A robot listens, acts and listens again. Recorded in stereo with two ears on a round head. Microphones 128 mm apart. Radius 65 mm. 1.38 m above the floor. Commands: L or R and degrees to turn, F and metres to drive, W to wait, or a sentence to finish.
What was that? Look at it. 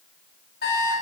L90
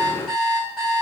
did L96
Found it: an alarm clock, straight ahead.